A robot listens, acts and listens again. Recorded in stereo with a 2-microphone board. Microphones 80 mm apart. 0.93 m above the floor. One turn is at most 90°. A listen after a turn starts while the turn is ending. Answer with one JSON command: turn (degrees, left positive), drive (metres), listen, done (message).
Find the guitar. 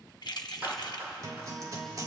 {"turn": -50}
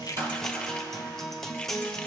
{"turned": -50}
{"done": "Found it: a guitar, straight ahead, 1 to 2 m away."}